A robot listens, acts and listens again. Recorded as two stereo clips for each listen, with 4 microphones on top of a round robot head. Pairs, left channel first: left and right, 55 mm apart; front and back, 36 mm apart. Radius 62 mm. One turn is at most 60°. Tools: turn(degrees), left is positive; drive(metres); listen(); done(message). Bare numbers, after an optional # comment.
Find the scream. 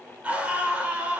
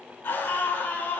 # The scream: 25° right.
turn(-25)
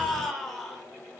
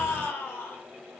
done("Facing the scream.")